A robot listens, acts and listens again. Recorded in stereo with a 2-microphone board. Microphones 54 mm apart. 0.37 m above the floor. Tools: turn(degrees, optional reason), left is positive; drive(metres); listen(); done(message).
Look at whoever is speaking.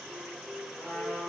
listen()
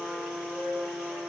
listen()
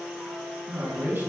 turn(degrees=-40, reason="The man speaking: about 40° right or 140° right.")
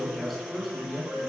done("Facing the man speaking, 2 to 4 m away.")